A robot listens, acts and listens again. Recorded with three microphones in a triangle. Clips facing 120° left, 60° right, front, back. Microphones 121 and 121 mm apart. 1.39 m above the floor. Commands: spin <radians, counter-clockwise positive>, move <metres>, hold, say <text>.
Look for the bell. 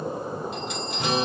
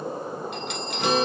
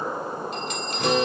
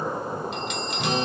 spin -0.79
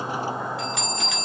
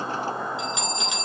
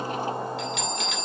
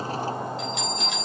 spin 0.17
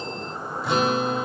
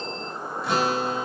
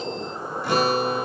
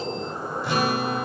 hold
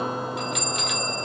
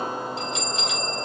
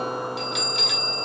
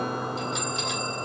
say Found it: a bell, straight ahead, 2 to 4 m away.